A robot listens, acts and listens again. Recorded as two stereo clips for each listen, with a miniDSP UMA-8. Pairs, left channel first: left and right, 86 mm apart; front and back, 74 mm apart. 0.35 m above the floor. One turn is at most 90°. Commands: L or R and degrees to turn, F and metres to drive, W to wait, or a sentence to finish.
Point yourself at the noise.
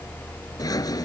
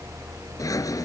L45
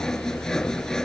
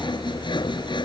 Found it: sawing, straight ahead.